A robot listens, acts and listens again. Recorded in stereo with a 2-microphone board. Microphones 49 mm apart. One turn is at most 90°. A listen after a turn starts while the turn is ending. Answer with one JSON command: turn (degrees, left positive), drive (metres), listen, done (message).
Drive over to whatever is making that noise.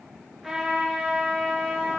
{"turn": 30}
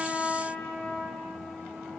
{"turn": 90}
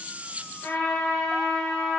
{"turn": 60}
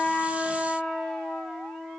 {"drive": 1.0}
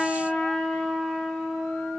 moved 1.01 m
{"turn": 10}
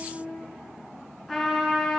{"drive": 1.0}
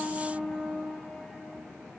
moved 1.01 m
{"drive": 1.0}
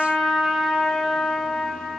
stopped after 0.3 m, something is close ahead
{"done": "I am next to the trumpet."}